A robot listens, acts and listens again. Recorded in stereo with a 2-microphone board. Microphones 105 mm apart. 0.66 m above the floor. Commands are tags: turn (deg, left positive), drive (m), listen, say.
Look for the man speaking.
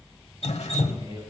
<turn deg="-35"/>
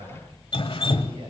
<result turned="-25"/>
<turn deg="-50"/>
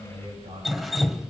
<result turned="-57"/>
<turn deg="-75"/>
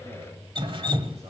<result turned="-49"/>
<turn deg="-25"/>
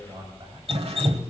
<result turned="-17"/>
<turn deg="-40"/>
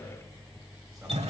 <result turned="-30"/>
<turn deg="-10"/>
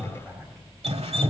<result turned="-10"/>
<say>Found it: a man speaking, straight ahead.</say>